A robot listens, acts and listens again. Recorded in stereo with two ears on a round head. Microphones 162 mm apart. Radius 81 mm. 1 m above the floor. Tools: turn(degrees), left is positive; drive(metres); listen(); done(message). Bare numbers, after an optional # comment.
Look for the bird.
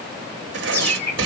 turn(30)
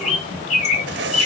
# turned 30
# So it is at 140° left.
turn(140)
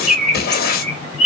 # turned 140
done("Found it: a bird, straight ahead.")